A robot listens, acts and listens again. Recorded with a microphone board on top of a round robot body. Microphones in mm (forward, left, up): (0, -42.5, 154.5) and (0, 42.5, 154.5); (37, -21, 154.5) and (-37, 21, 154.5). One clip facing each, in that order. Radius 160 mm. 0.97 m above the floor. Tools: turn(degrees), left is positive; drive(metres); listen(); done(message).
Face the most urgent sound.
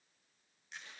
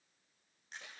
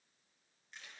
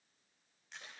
listen()
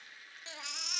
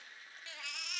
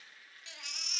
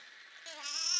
turn(degrees=-160)
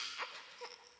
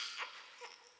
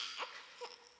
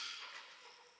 turn(degrees=-10)
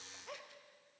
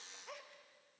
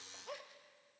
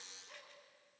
listen()
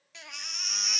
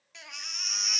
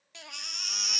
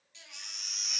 done("Found it: a baby crying, straight ahead, 1 to 2 m away.")